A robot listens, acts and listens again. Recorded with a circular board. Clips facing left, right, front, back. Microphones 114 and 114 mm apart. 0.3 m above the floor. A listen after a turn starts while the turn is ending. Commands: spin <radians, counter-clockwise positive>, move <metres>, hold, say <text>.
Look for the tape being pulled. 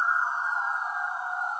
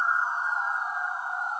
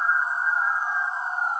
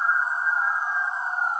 hold
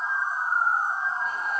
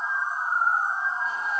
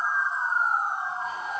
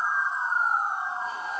hold
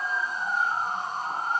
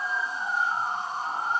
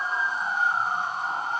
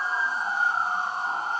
say I can't make out tape being pulled.